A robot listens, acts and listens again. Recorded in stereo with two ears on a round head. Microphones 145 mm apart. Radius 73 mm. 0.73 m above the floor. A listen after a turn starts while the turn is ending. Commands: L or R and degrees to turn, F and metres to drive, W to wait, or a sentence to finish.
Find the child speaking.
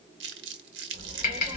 R40
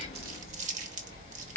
R120
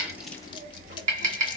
R60
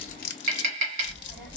R10
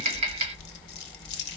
Found it: a child speaking, straight ahead.